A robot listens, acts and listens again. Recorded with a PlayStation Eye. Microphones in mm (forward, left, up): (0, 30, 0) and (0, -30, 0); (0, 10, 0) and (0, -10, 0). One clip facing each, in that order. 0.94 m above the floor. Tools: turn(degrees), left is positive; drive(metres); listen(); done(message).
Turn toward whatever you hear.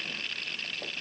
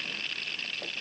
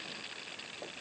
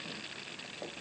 listen()
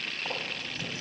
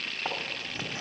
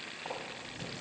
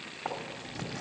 turn(degrees=-30)
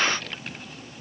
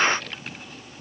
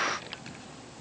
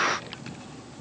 done("Found it: writing, straight ahead.")